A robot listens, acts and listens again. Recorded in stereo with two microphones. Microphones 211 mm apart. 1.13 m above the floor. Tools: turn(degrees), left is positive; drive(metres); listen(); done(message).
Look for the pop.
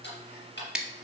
listen()
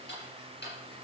listen()
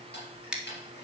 done("I can't make out a pop to turn to.")